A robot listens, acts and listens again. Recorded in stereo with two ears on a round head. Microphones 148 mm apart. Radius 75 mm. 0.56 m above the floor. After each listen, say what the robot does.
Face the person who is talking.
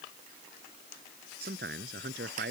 Turn 60° right.
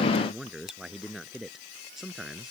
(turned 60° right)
Found it: a man speaking, straight ahead.